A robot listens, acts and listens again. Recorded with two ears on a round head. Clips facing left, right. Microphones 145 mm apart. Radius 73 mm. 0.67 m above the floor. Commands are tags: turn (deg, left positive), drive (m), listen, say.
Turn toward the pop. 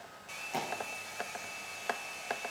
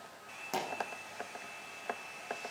<turn deg="-65"/>
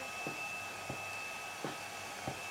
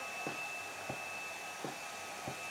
<listen/>
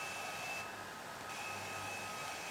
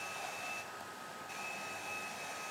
<say>I heard a pop, but can't make it out now. It was about straight ahead or 50° right.</say>